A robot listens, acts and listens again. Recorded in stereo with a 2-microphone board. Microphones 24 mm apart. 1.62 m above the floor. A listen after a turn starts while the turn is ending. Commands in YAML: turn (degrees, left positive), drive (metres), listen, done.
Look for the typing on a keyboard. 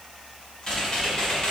turn: 30
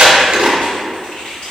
turn: 120
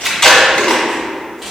done: "Found it: typing on a keyboard, straight ahead, 1 to 2 m away."